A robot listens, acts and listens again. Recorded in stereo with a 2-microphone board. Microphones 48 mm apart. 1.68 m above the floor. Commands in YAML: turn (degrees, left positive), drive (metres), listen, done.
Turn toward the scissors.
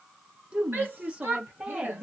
listen: true
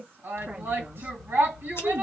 turn: 65
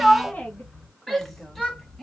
done: "Facing the scissors, under 1 m away."